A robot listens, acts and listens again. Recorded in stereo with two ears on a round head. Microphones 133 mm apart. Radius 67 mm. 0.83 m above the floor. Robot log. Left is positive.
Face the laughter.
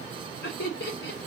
cmd yaw +90
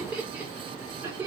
note: So it is at 15° right.
cmd yaw -15
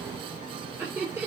note: The laughter is now 15° right.
cmd yaw -15
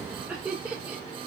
note: The laughter is now 15° right.
cmd yaw -15
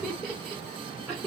note: The laughter is now 10° right.
cmd yaw -10
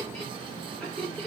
end: Facing the laughter, 2 to 4 m away.